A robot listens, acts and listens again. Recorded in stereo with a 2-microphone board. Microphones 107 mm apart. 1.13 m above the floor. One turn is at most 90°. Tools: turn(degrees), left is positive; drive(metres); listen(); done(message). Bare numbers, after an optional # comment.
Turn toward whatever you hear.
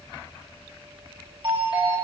# The doorbell: about 55° right or 125° right.
turn(-55)
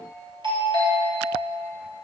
# So it is at 60° right.
turn(-60)
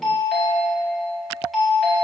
done("Facing the doorbell.")